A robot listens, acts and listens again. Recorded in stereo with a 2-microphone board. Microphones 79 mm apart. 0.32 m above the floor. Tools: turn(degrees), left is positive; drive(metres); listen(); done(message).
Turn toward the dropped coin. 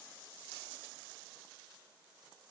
listen()
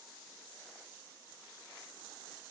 listen()
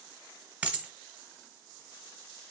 turn(degrees=-15)
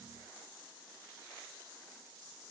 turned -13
listen()
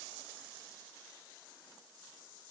done("I heard a dropped coin, but can't make it out now. It was about 5° right or 150° right.")